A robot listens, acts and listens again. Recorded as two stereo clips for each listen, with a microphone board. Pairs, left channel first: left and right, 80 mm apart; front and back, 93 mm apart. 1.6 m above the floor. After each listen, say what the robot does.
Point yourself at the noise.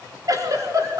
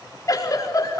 Turn 50° right.
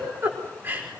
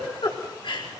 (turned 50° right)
Turn 25° right.
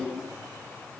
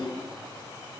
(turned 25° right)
Found it: a giggle, straight ahead.